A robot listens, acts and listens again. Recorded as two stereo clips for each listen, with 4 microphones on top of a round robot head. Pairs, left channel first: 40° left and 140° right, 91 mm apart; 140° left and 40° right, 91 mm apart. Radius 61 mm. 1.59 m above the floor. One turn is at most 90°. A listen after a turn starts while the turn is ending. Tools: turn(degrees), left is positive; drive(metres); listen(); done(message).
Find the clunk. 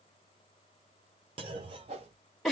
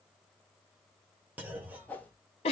turn(degrees=-90)
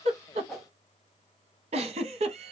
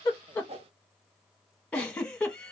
turn(degrees=-20)
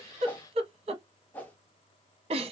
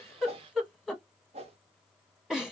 done("Facing where the clunk came from. I can't hear it now.")